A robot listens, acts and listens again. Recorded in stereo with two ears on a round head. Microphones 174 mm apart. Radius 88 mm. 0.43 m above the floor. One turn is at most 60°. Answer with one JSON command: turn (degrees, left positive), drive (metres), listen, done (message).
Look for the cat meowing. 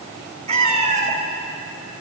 {"turn": -35}
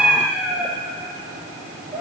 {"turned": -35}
{"turn": -10}
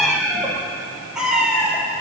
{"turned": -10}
{"done": "Found it: a cat meowing, straight ahead."}